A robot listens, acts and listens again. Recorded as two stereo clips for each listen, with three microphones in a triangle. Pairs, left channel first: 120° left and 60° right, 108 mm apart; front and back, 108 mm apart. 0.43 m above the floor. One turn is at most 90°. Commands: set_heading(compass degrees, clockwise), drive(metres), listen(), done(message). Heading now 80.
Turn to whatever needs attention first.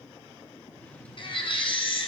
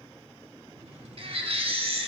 set_heading(350)
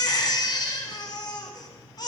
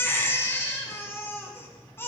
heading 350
set_heading(280)
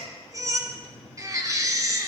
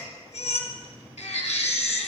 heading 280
done("Found it: a baby crying, straight ahead, 2 to 4 m away.")